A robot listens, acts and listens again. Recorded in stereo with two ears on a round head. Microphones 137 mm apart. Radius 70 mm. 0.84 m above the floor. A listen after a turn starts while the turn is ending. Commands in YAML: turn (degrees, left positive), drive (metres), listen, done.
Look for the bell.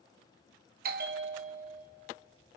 turn: -60
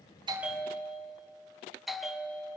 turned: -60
done: "Facing the bell, under 1 m away."